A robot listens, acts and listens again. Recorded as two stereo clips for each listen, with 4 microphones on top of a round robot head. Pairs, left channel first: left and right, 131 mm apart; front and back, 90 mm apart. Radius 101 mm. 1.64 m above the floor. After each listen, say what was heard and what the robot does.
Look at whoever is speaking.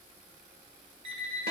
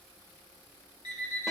Keep listening.
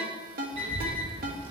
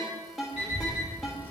The child speaking: 140° right. Turn 140° right.
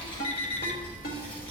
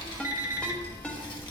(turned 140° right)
The child speaking is now 25° left. Turn 25° left.
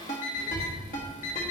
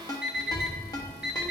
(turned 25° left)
Found it: a child speaking, straight ahead, 1 to 2 m away.